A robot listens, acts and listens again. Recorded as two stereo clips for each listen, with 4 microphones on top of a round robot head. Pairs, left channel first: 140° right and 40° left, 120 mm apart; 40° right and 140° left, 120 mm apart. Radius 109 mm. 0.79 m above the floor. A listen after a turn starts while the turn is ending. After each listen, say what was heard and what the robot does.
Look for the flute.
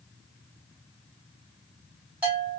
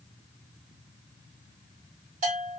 Keep listening.
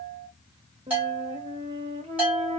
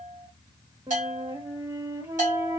The flute: 70° left. Turn 70° left.
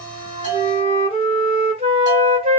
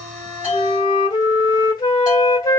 The flute is now 10° left. Turn 10° left.
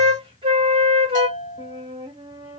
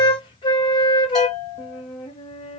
Facing the flute, 1 to 2 m away.